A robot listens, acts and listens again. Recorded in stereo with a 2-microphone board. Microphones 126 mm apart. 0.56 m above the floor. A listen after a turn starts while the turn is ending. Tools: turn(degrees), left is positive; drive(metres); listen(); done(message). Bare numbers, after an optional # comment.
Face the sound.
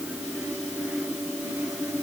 listen()
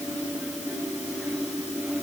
listen()
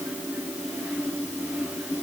done("I can't make out anything.")